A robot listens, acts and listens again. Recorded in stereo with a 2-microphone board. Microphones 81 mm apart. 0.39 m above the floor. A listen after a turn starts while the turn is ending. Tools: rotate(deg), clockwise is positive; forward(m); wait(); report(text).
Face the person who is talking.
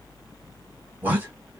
rotate(25)
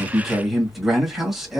report("Facing the man speaking.")